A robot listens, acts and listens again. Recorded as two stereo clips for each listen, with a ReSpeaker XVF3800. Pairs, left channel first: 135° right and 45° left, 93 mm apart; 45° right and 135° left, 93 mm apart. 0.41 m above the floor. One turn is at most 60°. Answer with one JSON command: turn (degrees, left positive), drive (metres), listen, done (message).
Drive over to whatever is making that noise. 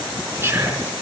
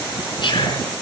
{"turn": -15}
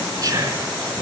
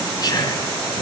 {"drive": 1.0}
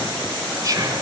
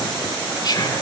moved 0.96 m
{"drive": 1.0}
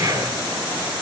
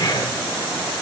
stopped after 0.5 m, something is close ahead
{"done": "Blocked. The whispering is further on, straight ahead."}